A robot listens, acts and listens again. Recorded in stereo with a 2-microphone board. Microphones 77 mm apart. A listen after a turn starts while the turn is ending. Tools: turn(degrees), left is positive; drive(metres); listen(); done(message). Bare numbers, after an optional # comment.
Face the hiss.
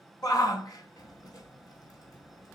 listen()
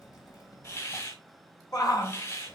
# The hiss: about 45° left or 135° left.
turn(45)
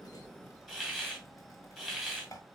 # So it is at 10° left.
turn(10)
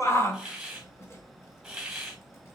done("Found it: a hiss, straight ahead, 2 to 4 m away.")